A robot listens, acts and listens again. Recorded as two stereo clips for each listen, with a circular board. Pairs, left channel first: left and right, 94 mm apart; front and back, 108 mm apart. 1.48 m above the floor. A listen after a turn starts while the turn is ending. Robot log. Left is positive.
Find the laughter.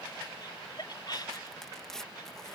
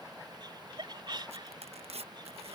note: The laughter: 130° left.
cmd yaw +130
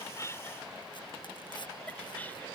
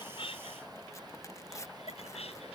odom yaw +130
note: The laughter is now 20° left.
cmd yaw +20
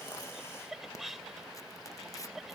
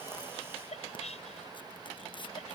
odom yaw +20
end: Facing the laughter.